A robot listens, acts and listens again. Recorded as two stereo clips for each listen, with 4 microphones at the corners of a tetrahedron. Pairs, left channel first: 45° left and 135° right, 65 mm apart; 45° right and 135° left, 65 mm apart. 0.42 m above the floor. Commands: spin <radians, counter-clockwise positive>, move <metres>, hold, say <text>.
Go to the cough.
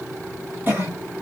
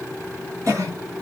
spin 2.97
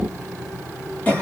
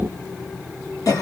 spin -0.35
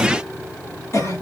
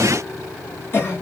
move 1.0
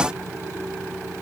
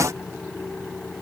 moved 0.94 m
hold
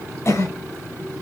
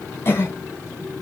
move 1.0
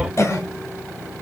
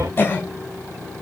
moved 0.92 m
spin 0.17
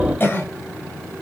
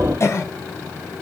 move 1.0
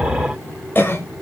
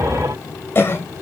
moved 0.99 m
move 1.0
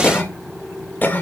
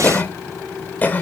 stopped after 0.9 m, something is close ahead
say Arrived at the cough, straight ahead.